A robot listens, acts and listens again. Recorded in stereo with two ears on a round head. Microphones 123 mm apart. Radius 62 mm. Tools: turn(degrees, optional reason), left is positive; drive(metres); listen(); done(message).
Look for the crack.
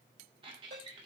listen()
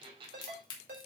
turn(degrees=30, reason="The crack: about 30° left or 150° left.")
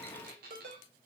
listen()
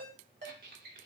done("I heard a crack, but can't make it out now. It was about straight ahead or 120° left.")